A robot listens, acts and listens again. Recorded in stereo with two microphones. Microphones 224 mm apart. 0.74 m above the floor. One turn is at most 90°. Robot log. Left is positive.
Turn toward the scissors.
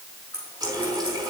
note: The scissors: about 75° right or 105° right.
cmd yaw -75
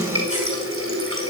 cmd idle
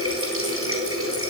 cmd idle
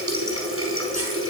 end: I heard scissors, but can't make it out now. It was about straight ahead or 30° right.